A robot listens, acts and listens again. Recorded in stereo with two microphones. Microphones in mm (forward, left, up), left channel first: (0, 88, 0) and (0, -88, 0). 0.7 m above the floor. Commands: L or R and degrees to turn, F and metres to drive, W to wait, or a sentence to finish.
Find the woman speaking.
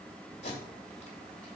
W
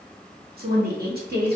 R65
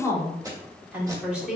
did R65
Facing the woman speaking, 1 to 2 m away.